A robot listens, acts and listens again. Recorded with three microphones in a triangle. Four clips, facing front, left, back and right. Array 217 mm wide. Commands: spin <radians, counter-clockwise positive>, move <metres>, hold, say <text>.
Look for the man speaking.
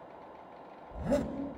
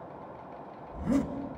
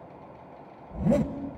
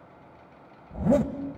hold
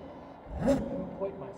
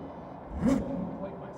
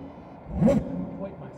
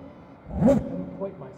spin -1.13
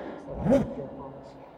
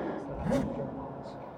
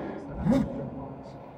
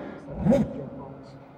hold
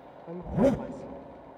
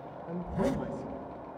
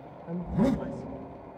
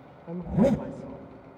spin -0.44
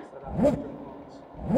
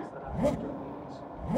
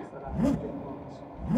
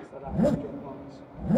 spin -1.57
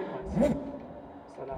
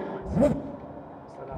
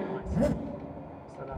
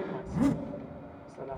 spin -0.26
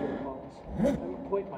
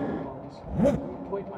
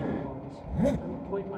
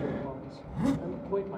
say Facing the man speaking, 1 to 2 m away.